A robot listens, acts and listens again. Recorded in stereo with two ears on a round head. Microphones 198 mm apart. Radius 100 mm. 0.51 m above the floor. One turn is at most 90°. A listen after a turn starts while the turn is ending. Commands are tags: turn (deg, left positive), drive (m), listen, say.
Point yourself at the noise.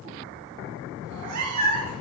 <turn deg="-70"/>
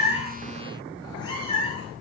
<turn deg="25"/>
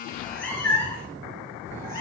<turn deg="15"/>
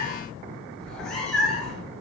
<say>Found it: a cat meowing, straight ahead.</say>